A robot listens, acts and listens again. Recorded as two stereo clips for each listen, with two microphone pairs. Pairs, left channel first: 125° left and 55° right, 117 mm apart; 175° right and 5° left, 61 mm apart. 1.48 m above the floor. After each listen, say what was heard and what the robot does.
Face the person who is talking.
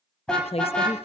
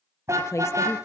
The woman speaking: 155° left. Turn 155° left.
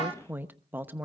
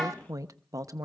The woman speaking is now 20° left. Turn 20° left.
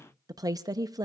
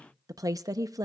Found it: a woman speaking, straight ahead, under 1 m away.